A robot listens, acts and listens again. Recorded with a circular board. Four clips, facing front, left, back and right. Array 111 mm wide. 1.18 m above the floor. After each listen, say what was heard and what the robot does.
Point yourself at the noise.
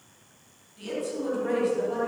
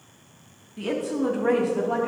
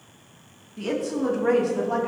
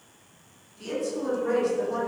The woman speaking: 130° left. Turn 130° left.
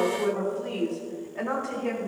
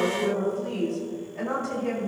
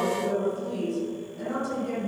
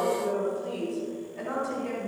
Found it: a woman speaking, straight ahead.